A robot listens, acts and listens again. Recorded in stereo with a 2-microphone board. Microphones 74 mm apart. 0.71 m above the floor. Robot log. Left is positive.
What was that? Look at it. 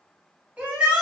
note: The shout: about 20° right or 160° right.
cmd yaw -20
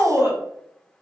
note: So it is at 140° right.
cmd yaw -140
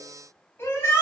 note: The shout is now 40° left.
cmd yaw +40
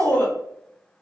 note: The shout is now 25° left.
cmd yaw +25
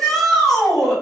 end: Facing the shout, 1 to 2 m away.